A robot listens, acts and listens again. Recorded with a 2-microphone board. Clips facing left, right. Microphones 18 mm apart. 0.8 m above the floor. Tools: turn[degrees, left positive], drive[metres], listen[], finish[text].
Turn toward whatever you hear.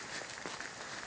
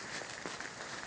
Action: listen[]
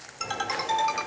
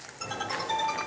Thought: The ringtone: about 45° left or 135° left.
Action: turn[45]
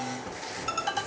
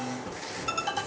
Action: finish[Facing the ringtone.]